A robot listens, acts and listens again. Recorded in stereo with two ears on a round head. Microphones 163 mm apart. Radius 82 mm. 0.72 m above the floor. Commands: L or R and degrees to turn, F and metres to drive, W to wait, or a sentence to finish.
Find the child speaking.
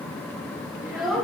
L30
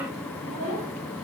L145
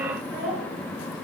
R10
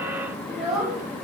Found it: a child speaking, straight ahead.